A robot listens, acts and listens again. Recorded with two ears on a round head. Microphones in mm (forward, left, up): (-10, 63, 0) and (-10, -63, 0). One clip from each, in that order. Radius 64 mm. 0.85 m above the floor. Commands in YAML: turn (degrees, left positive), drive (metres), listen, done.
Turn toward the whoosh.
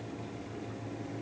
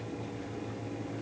listen: true
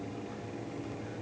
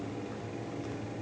listen: true
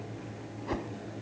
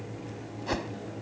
turn: -65
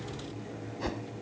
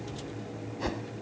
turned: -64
done: "Facing the whoosh."